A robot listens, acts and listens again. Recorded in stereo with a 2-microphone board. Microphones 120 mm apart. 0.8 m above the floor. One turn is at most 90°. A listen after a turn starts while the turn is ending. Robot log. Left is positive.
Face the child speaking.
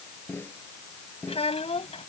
note: The child speaking: about 60° left or 120° left.
cmd yaw +60
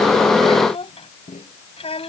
note: So it is at 60° left.
cmd yaw +60
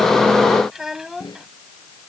end: Found it: a child speaking, straight ahead.